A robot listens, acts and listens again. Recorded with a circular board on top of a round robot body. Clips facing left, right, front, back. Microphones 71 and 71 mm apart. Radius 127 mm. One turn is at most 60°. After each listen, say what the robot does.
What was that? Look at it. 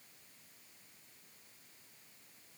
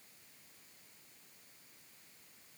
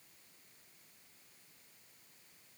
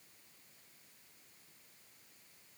Keep listening.
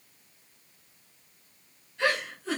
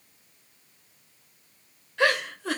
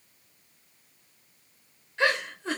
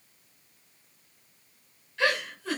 Turn 60° right.
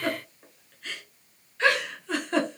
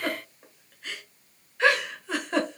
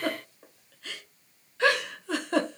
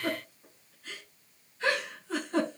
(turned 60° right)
Found it: a giggle, straight ahead.